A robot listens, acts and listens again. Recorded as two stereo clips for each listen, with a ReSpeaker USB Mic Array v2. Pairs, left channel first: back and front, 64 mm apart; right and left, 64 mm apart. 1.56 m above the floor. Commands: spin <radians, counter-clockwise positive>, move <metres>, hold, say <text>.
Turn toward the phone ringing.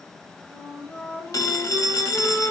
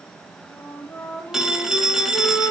spin 2.97
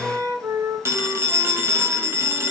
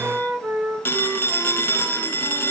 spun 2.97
spin -0.70
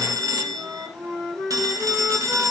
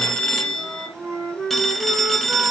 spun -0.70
say Facing the phone ringing, 1 to 2 m away.